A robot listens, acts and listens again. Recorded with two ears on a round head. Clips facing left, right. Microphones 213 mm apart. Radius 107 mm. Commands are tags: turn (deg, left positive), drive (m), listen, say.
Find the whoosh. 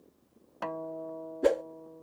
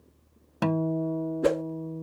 <turn deg="-30"/>
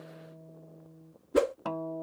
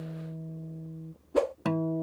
<turn deg="25"/>
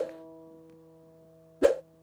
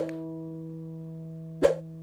<say>Found it: a whoosh, straight ahead.</say>